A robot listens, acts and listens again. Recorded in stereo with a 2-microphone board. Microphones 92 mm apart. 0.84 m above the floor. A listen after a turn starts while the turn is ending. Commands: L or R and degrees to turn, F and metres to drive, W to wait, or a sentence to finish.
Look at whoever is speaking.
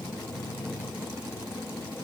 W
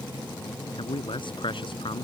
L70
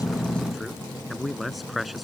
Found it: a man speaking, straight ahead.